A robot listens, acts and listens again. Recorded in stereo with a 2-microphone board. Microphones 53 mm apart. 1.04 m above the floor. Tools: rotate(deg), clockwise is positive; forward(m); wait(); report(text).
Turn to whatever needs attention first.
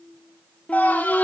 rotate(-30)
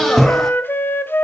report("Facing the scream.")